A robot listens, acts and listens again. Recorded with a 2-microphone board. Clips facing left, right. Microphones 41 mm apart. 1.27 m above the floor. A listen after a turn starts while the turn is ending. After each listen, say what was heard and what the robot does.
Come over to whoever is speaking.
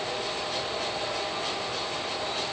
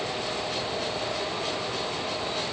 Keep listening.
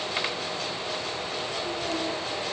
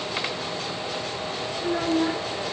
Turn 90° right.
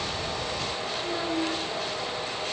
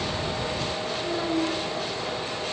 Drive 1.0 m forward.
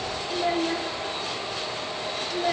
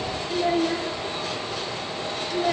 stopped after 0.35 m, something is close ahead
Blocked. The child speaking is further on, straight ahead.